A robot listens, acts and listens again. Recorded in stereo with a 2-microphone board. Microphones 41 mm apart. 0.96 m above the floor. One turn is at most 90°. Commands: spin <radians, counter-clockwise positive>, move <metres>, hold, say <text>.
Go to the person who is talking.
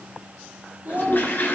spin -0.61
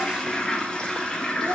hold
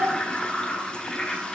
spin -1.57
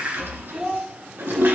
spin -0.35
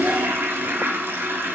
hold
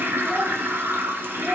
hold
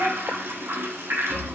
say Facing where the child speaking came from. I can't hear it now. I did not reach it.